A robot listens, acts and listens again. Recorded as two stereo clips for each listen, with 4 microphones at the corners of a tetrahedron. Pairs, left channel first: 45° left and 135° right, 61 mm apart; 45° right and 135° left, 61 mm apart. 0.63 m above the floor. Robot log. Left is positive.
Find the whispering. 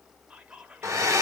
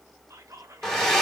note: The whispering: 155° left.
cmd yaw +155
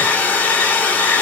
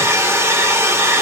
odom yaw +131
note: Nothing new. It was at 25° left.
cmd yaw +25
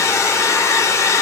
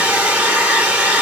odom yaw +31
cmd idle
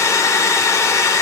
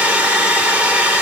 end: I heard whispering from this way, but can't make it out now.